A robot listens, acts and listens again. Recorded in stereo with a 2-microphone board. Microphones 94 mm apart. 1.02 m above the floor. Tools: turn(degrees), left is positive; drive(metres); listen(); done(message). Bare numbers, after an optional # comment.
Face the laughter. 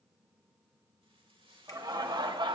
# The laughter: about 55° right or 125° right.
turn(-55)
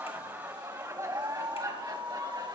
# So it is at 45° right.
turn(-45)
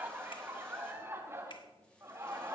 # The laughter is now 30° right.
turn(-30)
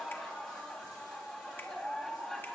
done("Found it: laughter, straight ahead.")